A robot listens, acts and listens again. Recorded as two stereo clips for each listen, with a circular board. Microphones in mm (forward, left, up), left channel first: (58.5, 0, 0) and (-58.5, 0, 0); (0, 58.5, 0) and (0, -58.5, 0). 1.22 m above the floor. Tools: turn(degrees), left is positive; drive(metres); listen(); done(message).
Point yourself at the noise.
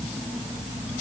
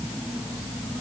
listen()
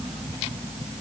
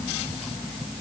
listen()
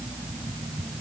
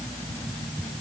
done("I can't make out anything to turn to.")